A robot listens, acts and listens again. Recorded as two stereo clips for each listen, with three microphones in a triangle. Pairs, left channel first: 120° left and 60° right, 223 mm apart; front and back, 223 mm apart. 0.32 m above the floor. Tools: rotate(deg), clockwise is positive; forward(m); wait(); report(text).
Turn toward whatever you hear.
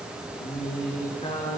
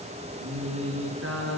rotate(175)
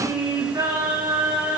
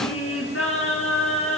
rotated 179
rotate(-15)
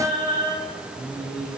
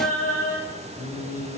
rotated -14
report("Found it: singing, straight ahead, over 4 m away.")